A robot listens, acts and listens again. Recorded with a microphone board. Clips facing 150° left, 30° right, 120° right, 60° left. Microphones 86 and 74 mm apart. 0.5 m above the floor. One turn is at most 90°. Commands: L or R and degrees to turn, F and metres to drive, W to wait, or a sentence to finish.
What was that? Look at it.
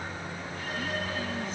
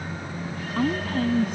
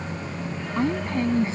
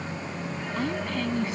R60
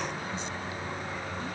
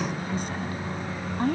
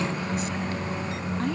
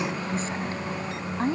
Found it: a woman speaking, straight ahead.